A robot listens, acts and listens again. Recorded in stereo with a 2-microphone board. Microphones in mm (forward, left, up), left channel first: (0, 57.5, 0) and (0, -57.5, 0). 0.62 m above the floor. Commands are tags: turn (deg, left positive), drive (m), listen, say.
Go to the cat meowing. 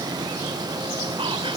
<listen/>
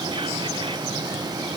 <listen/>
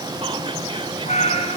<turn deg="75"/>
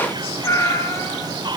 <turn deg="25"/>
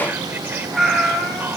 <drive m="1.0"/>
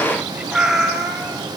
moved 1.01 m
<drive m="1.0"/>
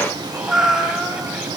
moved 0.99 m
<drive m="1.0"/>
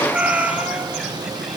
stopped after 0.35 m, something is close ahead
<turn deg="-10"/>
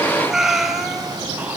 <say>Arrived at the cat meowing, straight ahead.</say>